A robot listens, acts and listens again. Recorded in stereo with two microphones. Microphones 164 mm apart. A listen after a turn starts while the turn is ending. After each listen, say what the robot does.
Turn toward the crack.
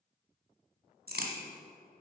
Turn 70° right.
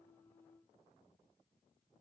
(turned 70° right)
Keep listening.
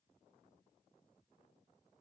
I heard a crack, but can't make it out now. It was about straight ahead or 40° right.